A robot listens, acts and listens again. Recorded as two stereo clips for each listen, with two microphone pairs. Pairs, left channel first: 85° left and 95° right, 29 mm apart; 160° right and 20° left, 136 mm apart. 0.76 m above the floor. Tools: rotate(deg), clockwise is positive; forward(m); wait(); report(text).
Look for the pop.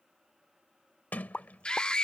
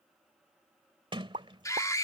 rotate(-30)
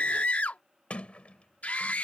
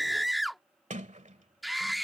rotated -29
report("Facing where the pop came from. I can't hear it now.")